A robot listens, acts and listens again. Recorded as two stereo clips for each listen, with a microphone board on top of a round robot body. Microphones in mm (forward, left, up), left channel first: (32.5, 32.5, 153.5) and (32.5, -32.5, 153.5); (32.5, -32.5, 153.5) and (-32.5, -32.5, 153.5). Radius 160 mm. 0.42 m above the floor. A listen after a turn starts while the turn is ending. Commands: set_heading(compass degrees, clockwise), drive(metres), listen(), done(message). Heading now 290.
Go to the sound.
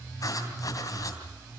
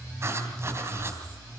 set_heading(160)
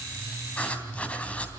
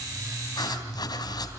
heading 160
set_heading(140)
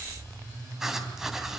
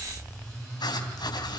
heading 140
drive(1.0)
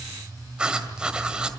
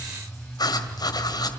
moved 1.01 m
set_heading(155)
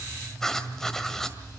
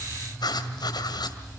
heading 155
drive(1.0)
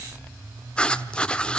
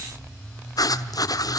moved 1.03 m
set_heading(140)
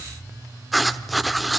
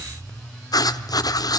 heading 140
drive(1.0)
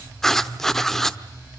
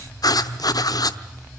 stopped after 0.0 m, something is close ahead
done("I am next to the writing.")